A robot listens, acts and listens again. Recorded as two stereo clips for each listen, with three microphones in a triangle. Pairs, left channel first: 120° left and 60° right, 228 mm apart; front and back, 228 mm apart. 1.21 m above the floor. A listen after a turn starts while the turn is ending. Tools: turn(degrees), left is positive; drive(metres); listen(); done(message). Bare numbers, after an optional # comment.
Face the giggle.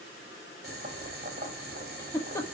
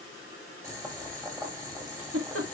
# The giggle: 160° right.
turn(-160)
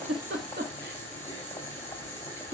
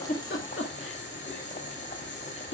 # The giggle is now 20° right.
turn(-20)
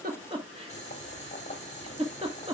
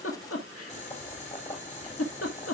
done("Found it: a giggle, straight ahead.")